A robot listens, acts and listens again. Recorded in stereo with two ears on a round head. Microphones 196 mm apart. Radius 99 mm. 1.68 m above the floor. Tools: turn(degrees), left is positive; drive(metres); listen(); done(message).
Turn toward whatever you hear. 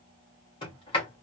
turn(degrees=25)
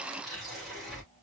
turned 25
done("Found it: a sliding door, straight ahead, 2 to 4 m away.")